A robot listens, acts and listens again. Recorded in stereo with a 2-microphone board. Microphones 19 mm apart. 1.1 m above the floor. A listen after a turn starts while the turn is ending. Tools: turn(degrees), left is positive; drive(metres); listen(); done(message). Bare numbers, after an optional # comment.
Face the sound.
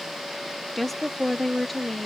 turn(30)
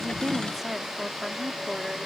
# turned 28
done("Found it: a woman speaking, straight ahead.")